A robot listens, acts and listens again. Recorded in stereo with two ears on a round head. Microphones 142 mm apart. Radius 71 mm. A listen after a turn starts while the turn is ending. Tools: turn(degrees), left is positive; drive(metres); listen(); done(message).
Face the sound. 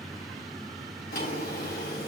turn(degrees=75)
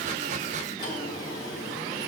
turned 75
turn(degrees=30)
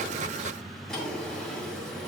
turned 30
done("Found it: a drawer, straight ahead.")